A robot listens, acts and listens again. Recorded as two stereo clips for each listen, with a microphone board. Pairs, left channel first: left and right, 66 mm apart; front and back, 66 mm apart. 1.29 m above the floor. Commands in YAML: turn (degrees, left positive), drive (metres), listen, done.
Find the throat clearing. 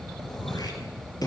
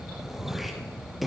turn: 90
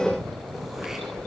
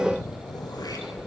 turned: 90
listen: true
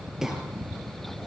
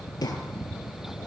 done: "Facing the throat clearing, over 4 m away."